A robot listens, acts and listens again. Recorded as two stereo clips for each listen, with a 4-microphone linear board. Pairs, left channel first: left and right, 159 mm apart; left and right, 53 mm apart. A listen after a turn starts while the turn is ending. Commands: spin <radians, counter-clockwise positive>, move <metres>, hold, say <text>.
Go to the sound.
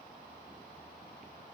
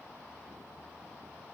hold
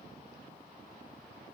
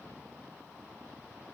hold
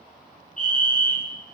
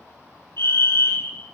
spin 0.96
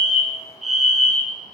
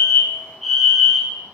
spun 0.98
move 1.0
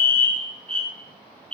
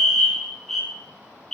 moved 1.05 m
move 1.0
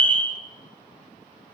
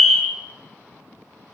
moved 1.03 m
spin 0.17
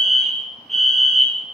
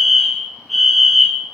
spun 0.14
move 1.0
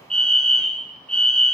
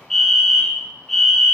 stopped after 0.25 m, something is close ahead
say I am next to the fire alarm.